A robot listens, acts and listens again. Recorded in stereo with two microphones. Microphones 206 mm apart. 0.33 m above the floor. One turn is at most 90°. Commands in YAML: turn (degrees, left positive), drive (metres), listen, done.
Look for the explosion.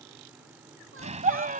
turn: -35
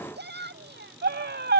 listen: true
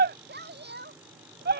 done: "I heard an explosion, but can't make it out now. It was about straight ahead or 110° right."